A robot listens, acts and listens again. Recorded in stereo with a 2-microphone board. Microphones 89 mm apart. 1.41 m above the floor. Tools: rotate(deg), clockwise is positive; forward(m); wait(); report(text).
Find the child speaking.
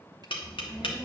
rotate(-35)
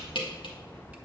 report("Found it: a child speaking, straight ahead.")